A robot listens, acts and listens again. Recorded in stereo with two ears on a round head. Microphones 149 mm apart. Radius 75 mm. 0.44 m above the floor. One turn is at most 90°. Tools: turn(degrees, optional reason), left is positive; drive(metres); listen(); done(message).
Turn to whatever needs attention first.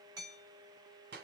listen()
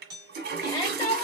turn(degrees=25, reason="The shout: about 25° left or 155° left.")
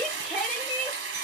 done("Found it: a shout, straight ahead.")